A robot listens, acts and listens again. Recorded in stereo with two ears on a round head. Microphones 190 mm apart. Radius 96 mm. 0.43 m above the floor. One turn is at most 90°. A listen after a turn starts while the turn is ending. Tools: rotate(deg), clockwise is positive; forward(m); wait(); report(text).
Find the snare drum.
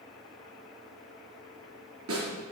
rotate(90)
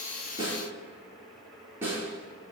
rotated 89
rotate(10)
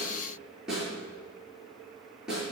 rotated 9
report("Found it: a snare drum, straight ahead, over 4 m away.")